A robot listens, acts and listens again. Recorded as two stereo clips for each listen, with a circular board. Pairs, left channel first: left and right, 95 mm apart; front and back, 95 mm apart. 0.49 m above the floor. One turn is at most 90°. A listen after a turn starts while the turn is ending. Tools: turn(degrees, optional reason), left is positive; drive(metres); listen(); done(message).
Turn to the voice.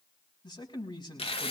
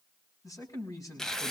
turn(degrees=50, reason="The man speaking: 50° left.")
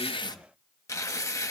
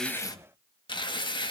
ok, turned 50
listen()
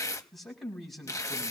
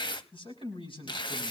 done("Found it: a man speaking, straight ahead, over 4 m away.")